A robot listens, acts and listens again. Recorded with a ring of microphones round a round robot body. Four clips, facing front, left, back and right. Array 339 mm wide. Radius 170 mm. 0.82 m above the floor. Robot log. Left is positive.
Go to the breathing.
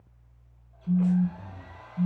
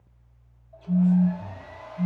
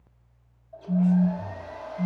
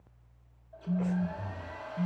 note: The breathing: 80° right.
cmd yaw -80
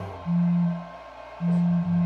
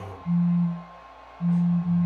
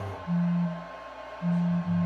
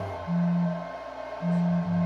note: The breathing is now 20° right.
cmd yaw -20
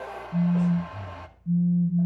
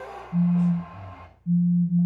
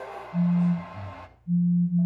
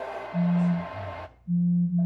cmd fwd 1.0
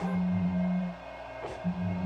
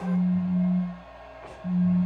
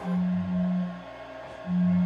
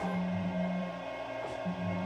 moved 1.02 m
cmd idle
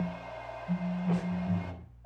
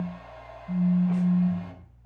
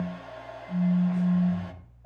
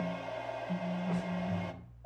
cmd idle
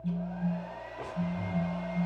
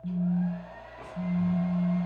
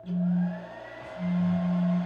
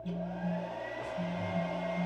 end: Facing where the breathing came from. I can't hear it now. I did not reach it.